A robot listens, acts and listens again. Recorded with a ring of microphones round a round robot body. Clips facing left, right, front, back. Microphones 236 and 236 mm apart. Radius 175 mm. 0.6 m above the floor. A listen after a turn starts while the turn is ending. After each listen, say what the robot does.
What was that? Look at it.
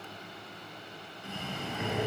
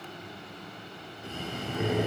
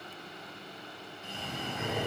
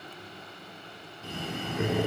Turn 150° right.
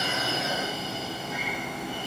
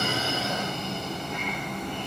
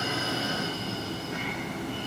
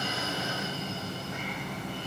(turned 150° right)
Facing the breathing.